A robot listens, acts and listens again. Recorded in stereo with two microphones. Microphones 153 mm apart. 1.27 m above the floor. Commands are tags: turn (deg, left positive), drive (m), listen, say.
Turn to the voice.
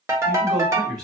<turn deg="-25"/>
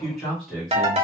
<say>Found it: a man speaking, straight ahead.</say>